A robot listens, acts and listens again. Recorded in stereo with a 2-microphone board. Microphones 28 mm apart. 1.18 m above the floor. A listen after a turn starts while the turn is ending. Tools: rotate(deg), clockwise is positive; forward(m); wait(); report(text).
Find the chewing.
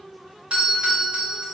wait()
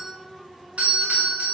wait()
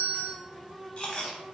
rotate(-40)
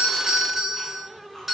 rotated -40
wait()
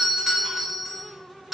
wait()
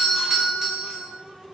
report("I heard chewing, but can't make it out now. It was about straight ahead or 100° left.")